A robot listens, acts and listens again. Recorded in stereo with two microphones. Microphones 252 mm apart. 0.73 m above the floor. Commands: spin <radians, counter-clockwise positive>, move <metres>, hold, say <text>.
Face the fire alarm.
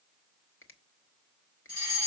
spin 0.52
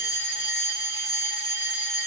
spin 2.01
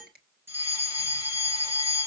spin -0.17
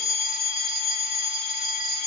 say Found it: a fire alarm, straight ahead, over 4 m away.